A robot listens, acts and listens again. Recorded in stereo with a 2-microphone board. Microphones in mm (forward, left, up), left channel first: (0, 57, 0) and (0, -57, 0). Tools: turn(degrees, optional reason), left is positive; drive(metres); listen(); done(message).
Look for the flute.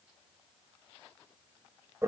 listen()
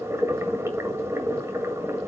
listen()
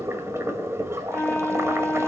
turn(degrees=15, reason="The flute: about 15° left or 165° left.")
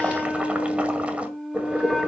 done("Found it: a flute, straight ahead, under 1 m away.")